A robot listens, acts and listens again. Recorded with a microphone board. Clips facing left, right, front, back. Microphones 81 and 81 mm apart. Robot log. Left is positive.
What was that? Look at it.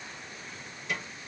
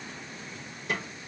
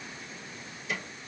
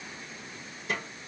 note: The snare drum: 130° right.
cmd yaw -130
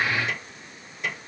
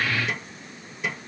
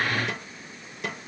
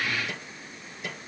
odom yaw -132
end: Found it: a snare drum, straight ahead, 2 to 4 m away.